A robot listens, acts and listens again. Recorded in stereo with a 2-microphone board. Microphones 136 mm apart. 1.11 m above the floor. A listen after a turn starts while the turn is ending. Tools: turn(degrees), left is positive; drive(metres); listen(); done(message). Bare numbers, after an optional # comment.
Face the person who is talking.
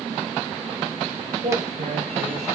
# The man speaking: about 70° right or 110° right.
turn(-70)
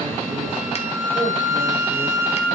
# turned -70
listen()
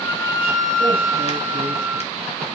listen()
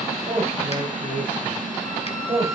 # So it is at 50° right.
turn(-50)
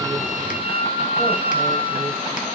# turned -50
listen()
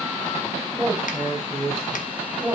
done("Facing the man speaking, over 4 m away.")